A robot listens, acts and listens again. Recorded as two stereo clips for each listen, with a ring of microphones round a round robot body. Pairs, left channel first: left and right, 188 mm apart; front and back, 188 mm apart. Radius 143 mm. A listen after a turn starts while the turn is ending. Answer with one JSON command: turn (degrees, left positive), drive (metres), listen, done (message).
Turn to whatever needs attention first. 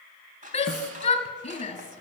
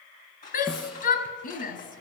{"turn": 30}
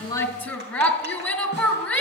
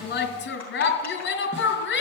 {"done": "Facing the shout."}